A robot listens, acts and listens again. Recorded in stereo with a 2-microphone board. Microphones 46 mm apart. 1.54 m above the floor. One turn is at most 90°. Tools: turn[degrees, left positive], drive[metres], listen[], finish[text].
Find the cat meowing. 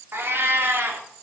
Thought: The cat meowing: about 55° right or 125° right.
Action: turn[-55]
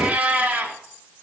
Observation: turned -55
Thought: So it is at 40° right.
Action: turn[-40]
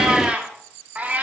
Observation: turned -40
Thought: The cat meowing is now 35° right.
Action: turn[-35]
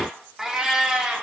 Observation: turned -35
Thought: The cat meowing is now 15° right.
Action: turn[-15]
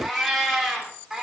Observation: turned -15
Action: finish[Found it: a cat meowing, straight ahead.]